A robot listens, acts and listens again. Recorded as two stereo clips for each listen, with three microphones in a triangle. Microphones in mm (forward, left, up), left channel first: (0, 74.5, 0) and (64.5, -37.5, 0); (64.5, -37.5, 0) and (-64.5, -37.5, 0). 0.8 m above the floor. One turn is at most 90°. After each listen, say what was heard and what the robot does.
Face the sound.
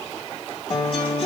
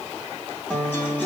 The guitar: 75° left. Turn 75° left.
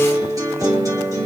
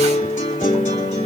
Facing the guitar, 2 to 4 m away.